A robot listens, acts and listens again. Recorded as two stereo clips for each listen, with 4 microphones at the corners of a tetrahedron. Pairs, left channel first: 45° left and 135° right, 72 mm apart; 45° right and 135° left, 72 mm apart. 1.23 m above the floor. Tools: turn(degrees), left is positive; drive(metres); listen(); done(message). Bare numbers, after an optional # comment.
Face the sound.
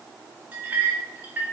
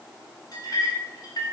# The clink: 70° right.
turn(-70)
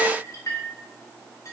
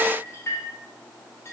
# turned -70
done("Found it: a clink, straight ahead.")